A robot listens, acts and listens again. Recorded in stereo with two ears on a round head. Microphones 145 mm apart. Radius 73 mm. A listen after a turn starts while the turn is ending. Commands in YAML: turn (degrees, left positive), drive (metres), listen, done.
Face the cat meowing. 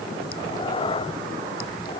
turn: 30
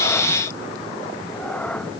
turn: 10
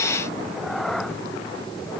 done: "Found it: a cat meowing, straight ahead."